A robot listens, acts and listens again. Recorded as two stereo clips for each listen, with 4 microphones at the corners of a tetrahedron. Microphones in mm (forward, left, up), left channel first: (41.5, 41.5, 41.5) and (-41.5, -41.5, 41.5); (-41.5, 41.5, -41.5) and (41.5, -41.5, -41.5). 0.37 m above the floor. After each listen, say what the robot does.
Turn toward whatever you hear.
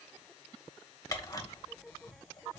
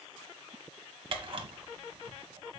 Turn 15° right.
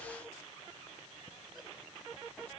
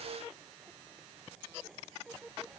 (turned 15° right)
Keep listening.
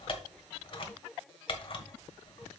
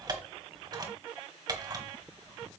Facing the camera shutter.